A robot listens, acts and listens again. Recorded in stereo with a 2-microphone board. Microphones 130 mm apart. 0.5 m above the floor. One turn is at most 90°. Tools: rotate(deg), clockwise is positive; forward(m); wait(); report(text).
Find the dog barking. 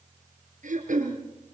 wait()
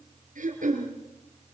wait()
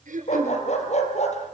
rotate(-60)
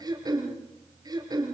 wait()
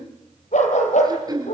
rotate(-70)
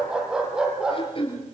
report("Found it: a dog barking, straight ahead.")